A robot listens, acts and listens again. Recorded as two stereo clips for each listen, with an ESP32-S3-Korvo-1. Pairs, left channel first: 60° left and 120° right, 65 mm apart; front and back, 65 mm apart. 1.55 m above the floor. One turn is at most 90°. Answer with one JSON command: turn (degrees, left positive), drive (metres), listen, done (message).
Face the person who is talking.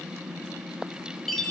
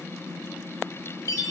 {"listen": true}
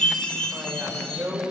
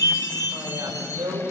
{"turn": 90}
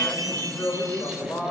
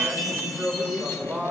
{"turn": 90}
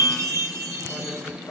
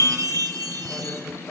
{"listen": true}
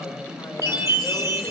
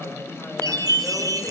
{"listen": true}
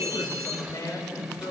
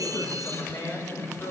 {"turn": 30}
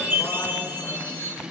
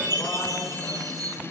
{"listen": true}
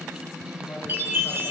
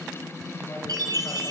{"listen": true}
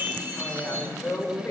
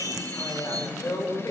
{"turn": 10}
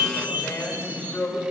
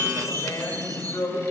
{"done": "Facing the woman speaking, over 4 m away."}